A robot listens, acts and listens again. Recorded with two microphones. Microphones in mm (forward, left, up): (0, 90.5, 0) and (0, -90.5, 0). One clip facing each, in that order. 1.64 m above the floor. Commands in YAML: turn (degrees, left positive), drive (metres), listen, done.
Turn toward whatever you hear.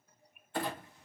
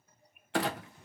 turn: -70
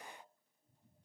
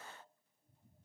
listen: true
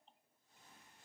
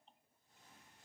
done: "I heard a clunk, but can't make it out now. It was about straight ahead or 40° right."